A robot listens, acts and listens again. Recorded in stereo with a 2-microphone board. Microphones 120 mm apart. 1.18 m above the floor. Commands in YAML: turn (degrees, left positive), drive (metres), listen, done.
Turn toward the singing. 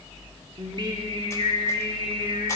turn: -40
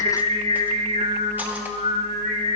turn: -90
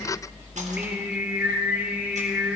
turn: -15
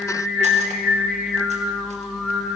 done: "Facing the singing, 1 to 2 m away."